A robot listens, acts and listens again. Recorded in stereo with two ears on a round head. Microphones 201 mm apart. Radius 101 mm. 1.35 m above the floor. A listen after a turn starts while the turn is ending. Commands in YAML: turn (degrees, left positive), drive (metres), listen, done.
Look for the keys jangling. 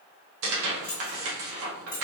turn: 15
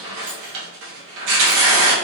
listen: true
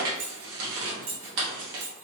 turn: -65
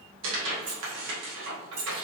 turn: -30
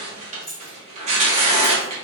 done: "Facing the keys jangling, 2 to 4 m away."